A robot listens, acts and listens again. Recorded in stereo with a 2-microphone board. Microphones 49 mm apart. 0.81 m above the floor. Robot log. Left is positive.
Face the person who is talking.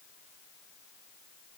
cmd idle
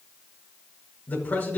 note: The man speaking: about 40° left or 140° left.
cmd yaw +40
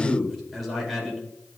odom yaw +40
end: Facing the man speaking, over 4 m away.